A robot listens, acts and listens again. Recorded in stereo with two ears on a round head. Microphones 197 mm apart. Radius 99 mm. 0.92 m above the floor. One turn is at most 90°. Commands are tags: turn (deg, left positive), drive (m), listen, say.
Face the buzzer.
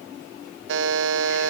<turn deg="-60"/>
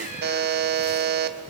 <turn deg="-50"/>
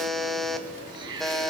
<say>Facing the buzzer.</say>